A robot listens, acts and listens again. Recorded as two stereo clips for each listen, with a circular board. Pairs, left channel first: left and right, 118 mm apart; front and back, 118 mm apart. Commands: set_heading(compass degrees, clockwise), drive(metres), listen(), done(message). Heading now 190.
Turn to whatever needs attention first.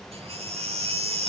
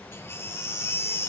set_heading(255)
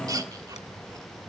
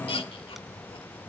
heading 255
set_heading(290)
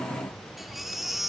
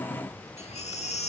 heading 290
done("Facing the baby crying, 1 to 2 m away.")